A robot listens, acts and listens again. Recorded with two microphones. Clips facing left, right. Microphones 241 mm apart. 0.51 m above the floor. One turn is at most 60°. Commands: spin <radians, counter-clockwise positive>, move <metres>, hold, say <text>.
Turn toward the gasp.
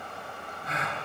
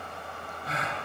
spin -0.61
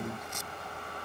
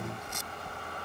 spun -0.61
hold
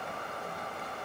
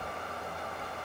say I heard a gasp, but can't make it out now. It was about straight ahead or 110° right.